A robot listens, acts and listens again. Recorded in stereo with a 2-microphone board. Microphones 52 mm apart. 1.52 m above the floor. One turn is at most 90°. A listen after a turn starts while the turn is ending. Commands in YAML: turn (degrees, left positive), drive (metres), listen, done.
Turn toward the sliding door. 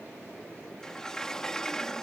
turn: 30
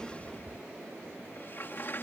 turn: 90
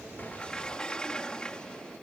turn: 15
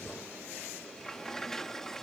turn: 10
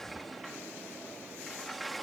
done: "Facing the sliding door."